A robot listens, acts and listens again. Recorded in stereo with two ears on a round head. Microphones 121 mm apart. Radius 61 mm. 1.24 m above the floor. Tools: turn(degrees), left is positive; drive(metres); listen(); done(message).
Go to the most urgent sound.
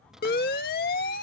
turn(degrees=90)
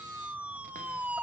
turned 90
turn(degrees=-10)
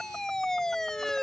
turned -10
drive(metres=1.0)
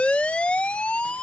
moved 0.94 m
turn(degrees=10)
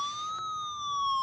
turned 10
drive(metres=1.0)
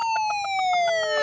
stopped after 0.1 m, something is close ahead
done("I am next to the siren.")